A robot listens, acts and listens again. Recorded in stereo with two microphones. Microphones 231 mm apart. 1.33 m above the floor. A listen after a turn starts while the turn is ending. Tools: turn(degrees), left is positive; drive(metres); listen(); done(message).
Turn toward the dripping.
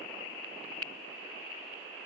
listen()
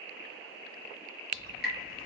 turn(degrees=40)
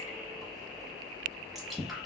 done("Found it: dripping, straight ahead, 1 to 2 m away.")